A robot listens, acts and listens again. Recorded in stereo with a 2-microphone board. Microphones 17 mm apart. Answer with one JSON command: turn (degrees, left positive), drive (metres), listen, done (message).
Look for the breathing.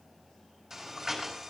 {"turn": -25}
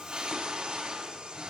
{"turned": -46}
{"turn": -105}
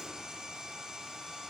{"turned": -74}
{"turn": -35}
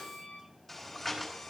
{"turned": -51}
{"turn": 15}
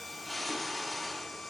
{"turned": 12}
{"done": "Facing the breathing."}